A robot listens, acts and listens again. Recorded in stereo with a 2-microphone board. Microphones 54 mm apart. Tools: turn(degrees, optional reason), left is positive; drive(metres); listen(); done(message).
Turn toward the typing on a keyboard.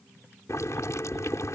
listen()
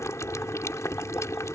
listen()
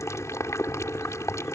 done("I can't make out typing on a keyboard to turn to.")